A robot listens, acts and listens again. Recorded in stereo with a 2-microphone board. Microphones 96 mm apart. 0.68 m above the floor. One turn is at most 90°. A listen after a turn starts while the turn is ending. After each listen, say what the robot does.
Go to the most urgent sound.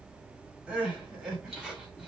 Turn 30° right.
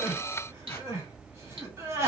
Turn 90° right.
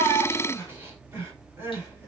Turn 25° right.
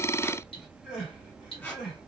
Drive 1.0 m forward.
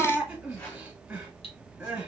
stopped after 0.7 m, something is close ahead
Turn 15° right.
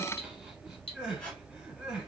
Turn 10° right.
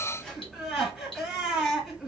I am next to the crying.